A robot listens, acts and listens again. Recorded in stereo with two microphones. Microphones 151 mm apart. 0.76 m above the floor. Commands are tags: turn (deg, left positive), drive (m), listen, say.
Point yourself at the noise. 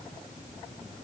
<listen/>
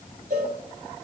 <turn deg="-65"/>
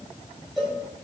<say>Facing the cowbell, 2 to 4 m away.</say>